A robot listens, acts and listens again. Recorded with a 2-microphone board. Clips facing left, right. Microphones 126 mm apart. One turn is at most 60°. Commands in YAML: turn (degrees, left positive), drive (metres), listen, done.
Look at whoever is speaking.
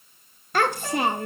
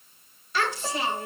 turn: 55
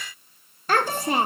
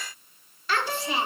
turn: 55
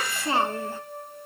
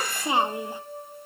turn: -15
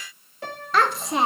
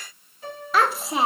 done: "Found it: a child speaking, straight ahead."